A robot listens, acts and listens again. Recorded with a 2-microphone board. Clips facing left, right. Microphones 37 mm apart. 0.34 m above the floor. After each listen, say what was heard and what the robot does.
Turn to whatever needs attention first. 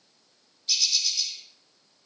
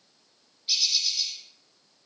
Keep listening.
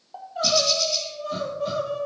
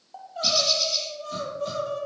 Turn 30° left.
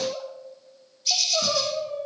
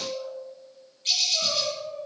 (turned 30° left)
So it is at 140° left. Turn 140° left.
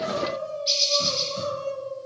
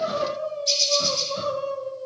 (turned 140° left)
The crying is now 10° right. Turn 10° right.
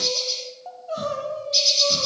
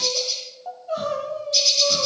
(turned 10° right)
Facing the crying, 1 to 2 m away.